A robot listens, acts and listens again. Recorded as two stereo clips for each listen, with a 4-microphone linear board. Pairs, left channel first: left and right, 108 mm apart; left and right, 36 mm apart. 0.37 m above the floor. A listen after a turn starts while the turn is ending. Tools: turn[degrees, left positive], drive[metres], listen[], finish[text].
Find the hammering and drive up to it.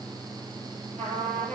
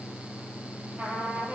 Action: listen[]
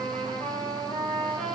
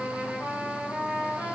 Action: listen[]
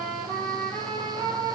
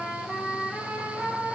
Action: finish[I can't make out hammering, only a trumpet.]